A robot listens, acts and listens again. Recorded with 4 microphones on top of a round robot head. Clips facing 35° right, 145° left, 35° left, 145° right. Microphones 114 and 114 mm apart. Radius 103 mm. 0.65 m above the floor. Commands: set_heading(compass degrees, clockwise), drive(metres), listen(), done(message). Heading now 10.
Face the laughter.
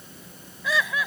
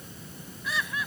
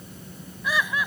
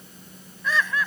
set_heading(50)
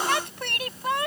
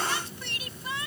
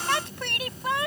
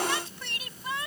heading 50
done("Facing the laughter.")